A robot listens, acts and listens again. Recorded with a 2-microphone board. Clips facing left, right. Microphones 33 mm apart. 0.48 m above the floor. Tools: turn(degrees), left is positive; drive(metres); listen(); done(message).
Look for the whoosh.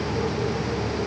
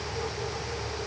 listen()
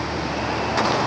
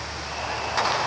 listen()
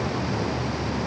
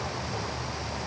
done("I can't make out a whoosh to turn to.")